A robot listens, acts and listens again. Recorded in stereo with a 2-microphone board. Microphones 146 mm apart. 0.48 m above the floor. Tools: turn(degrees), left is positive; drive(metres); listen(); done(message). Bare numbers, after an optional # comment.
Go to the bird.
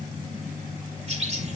# The bird: about 50° right or 130° right.
turn(-50)
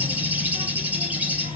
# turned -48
# So it is at 15° right.
turn(-15)
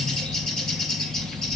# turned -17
drive(1.0)
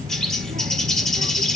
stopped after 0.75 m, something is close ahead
done("I am next to the bird.")